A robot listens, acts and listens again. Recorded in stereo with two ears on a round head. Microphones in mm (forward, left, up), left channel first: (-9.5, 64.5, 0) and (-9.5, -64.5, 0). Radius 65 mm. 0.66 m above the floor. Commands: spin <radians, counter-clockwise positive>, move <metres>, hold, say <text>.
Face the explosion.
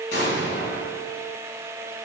spin 1.57
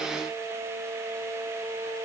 say I heard an explosion from this way, but can't make it out now.